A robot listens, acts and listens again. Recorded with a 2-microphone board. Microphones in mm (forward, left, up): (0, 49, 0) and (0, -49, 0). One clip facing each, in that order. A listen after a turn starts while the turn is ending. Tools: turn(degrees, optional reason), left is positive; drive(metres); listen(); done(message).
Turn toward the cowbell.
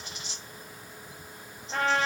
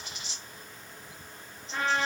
listen()
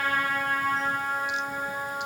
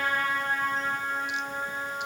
listen()
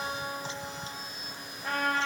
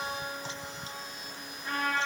done("I can't make out a cowbell to turn to.")